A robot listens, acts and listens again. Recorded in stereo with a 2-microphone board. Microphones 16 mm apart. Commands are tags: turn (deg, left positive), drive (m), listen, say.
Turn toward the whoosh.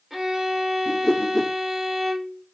<turn deg="50"/>
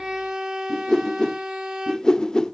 <turn deg="65"/>
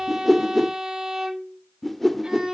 <turn deg="10"/>
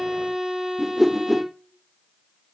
<say>Facing the whoosh.</say>